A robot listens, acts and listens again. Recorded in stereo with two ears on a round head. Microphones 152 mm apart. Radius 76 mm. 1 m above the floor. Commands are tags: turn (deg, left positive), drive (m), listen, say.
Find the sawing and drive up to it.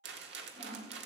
<turn deg="-45"/>
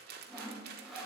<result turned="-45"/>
<drive m="1.0"/>
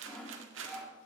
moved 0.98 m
<drive m="1.0"/>
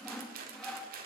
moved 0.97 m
<drive m="1.0"/>
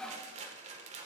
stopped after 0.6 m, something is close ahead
<say>Arrived at the sawing, straight ahead.</say>